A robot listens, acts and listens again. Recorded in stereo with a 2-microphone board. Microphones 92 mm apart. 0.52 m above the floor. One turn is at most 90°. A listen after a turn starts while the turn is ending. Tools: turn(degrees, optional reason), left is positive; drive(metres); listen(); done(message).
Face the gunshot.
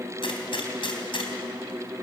turn(degrees=70, reason="The gunshot: about 70° left or 110° left.")
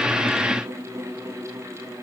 listen()
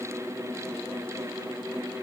done("I heard a gunshot, but can't make it out now. It was about straight ahead or 40° left.")